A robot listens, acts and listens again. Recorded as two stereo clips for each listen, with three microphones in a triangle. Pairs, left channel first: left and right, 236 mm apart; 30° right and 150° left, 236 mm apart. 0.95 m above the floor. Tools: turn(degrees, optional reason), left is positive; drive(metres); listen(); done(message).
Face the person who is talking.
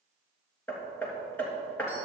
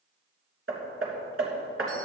listen()
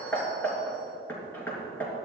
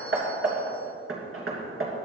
listen()
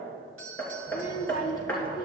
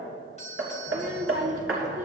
turn(degrees=140, reason="The child speaking: 140° left.")
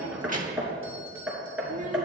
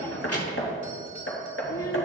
turn(degrees=-35, reason="The child speaking is now 35° right.")
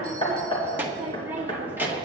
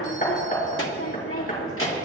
turn(degrees=-10, reason="The child speaking is now 10° right.")
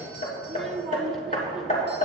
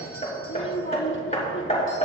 done("Facing the child speaking, 1 to 2 m away.")